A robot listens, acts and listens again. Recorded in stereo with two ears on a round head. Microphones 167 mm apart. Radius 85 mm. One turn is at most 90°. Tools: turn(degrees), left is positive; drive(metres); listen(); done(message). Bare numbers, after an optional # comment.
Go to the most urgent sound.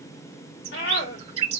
# The scream: about 55° left or 125° left.
turn(55)
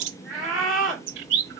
drive(1.0)
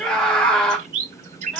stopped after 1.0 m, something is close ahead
done("I am next to the scream.")